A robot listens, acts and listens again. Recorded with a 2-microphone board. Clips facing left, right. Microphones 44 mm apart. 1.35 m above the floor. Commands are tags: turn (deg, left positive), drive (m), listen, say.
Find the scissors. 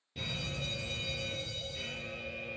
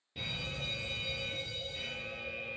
<listen/>
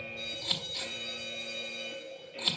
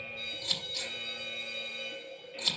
<turn deg="15"/>
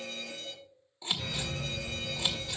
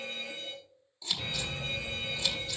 <turn deg="150"/>
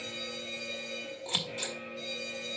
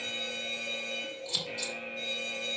<turn deg="45"/>
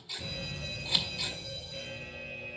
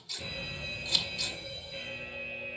<turn deg="15"/>
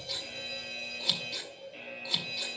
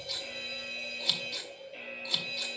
<say>Found it: scissors, straight ahead, 1 to 2 m away.</say>